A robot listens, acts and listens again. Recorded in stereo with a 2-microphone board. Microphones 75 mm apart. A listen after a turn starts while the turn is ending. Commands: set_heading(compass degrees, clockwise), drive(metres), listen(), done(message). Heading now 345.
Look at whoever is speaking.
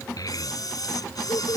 set_heading(290)
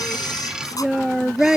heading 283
done("Found it: a child speaking, straight ahead.")